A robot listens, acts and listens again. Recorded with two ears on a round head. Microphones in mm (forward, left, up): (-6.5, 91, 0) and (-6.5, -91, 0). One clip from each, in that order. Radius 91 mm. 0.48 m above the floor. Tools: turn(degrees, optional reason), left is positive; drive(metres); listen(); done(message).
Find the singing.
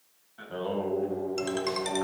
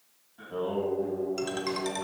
turn(degrees=60, reason="The singing: about 60° left or 120° left.")
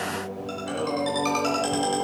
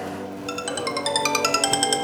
turn(degrees=25, reason="So it is at 25° left.")
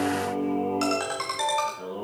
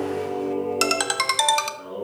turn(degrees=25, reason="The singing is now 25° left.")
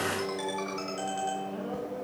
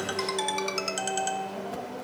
done("Found it: singing, straight ahead.")